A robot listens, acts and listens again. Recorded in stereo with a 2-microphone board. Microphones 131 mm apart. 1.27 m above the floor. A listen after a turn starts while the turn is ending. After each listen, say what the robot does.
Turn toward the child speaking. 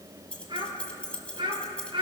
Turn 40° right.
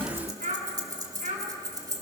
Turn 100° right.
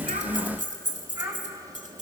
Turn 20° right.
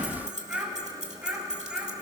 Turn 10° right.
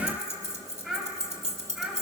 Found it: a child speaking, straight ahead, over 4 m away.